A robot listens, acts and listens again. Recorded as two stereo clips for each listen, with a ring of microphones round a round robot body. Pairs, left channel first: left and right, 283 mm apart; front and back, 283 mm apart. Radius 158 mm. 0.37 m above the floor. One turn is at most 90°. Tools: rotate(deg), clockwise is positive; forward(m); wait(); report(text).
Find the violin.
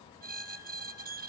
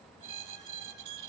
wait()
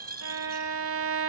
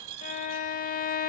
rotate(55)
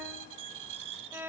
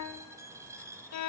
rotate(10)
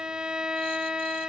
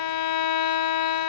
report("Found it: a violin, straight ahead.")